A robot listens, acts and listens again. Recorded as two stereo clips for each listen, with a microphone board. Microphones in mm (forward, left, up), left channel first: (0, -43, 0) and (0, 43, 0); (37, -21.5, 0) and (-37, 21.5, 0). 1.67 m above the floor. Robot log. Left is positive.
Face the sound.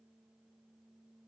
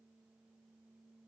cmd idle
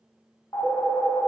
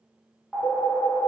note: The phone ringing: 110° right.
cmd yaw -110
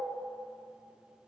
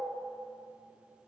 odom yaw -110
cmd idle
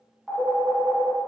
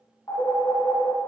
end: Found it: a phone ringing, straight ahead.